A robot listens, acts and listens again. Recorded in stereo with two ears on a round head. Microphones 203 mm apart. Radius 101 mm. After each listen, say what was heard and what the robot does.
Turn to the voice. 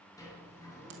Keep listening.
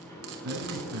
The man speaking: about 55° right or 125° right. Turn 55° right.
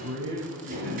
So it is at 65° right. Turn 65° right.
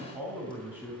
The man speaking is now 10° right. Turn 10° right.
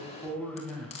Facing the man speaking, 2 to 4 m away.